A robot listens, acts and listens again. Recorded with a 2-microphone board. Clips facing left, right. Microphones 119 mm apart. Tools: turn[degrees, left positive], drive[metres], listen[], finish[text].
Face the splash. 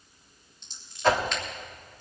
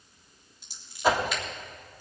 Action: listen[]
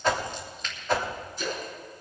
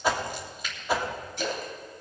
Action: turn[-90]
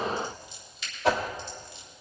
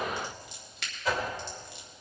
Action: finish[Facing where the splash came from. I can't hear it now.]